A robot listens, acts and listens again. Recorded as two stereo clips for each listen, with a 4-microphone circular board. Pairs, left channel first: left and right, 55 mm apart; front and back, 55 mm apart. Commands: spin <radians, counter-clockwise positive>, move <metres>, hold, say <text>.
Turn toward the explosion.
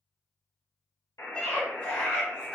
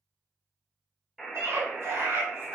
hold
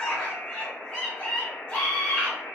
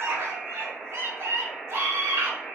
hold
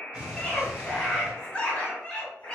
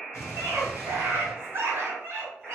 spin -0.26
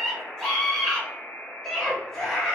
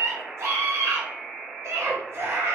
say I heard an explosion from this way, but can't make it out now.